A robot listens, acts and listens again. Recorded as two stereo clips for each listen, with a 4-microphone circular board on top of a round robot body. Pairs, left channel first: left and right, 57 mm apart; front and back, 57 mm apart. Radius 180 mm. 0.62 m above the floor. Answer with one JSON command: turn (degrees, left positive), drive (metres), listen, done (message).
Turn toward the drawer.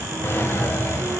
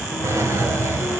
{"turn": 140}
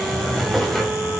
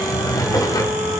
{"done": "Facing the drawer, 2 to 4 m away."}